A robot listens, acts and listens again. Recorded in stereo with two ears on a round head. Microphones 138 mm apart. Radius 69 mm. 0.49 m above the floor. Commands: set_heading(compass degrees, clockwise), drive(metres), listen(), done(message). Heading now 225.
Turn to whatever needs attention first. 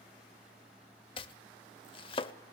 listen()
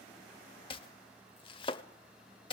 listen()
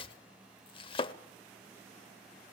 done("I can't make out anything urgent, only chopping.")